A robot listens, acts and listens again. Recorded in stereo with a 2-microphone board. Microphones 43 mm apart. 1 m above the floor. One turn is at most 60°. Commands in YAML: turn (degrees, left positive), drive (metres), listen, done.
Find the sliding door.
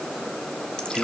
listen: true
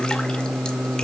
listen: true
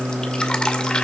done: "I can't make out a sliding door, only singing and dripping."